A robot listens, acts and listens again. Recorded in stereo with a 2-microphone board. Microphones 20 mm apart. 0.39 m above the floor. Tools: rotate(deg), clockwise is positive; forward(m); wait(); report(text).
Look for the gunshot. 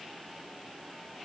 wait()
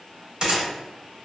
rotate(40)
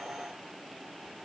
wait()
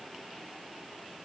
report("I heard a gunshot, but can't make it out now. It was about straight ahead or 100° right.")